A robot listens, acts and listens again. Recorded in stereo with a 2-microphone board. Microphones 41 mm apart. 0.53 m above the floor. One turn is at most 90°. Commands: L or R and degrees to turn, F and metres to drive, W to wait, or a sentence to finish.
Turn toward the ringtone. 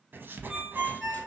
R30
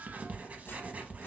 W
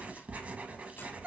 R90
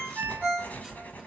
R30
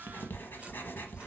W
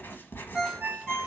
Found it: a ringtone, straight ahead, 1 to 2 m away.